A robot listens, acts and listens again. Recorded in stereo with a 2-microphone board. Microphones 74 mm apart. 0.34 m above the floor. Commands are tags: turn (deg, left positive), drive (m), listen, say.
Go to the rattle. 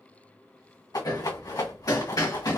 <turn deg="60"/>
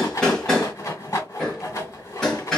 <turn deg="45"/>
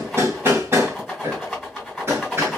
<drive m="1.0"/>
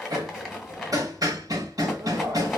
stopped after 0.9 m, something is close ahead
<say>I am next to the rattle.</say>